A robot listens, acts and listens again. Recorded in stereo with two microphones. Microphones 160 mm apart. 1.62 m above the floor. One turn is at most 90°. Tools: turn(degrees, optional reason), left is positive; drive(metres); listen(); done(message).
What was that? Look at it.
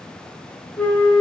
turn(degrees=30)
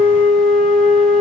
turn(degrees=90, reason="So it is at 140° left.")
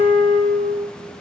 turn(degrees=50, reason="The flute is now 50° left.")
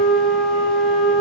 done("Facing the flute, 1 to 2 m away.")